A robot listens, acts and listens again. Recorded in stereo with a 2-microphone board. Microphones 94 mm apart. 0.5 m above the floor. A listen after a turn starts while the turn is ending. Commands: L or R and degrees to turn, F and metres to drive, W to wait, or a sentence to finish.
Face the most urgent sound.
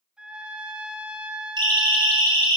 R50
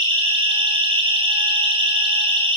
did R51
R75
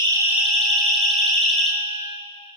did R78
Facing the siren.